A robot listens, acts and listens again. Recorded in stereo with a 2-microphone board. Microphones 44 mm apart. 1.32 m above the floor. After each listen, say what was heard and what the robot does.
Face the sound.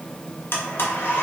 The blender: about 60° left or 120° left. Turn 60° left.
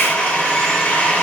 So it is at 45° left. Turn 45° left.
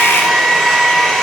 Facing the blender, under 1 m away.